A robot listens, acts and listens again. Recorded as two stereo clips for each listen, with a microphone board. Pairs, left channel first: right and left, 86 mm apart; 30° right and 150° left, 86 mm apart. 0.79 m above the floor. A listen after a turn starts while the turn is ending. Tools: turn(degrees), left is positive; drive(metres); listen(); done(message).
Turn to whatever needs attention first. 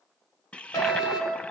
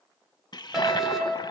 turn(degrees=-125)
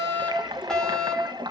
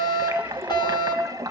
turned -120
done("Facing the fire alarm, over 4 m away.")